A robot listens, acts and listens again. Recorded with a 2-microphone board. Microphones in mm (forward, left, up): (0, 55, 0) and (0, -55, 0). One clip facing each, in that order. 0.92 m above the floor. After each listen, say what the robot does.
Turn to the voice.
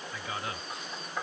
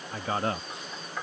Turn 45° right.
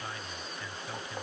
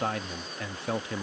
Turn 85° right.
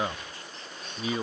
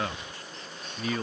Turn 15° left.
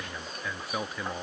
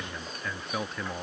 Facing the man speaking.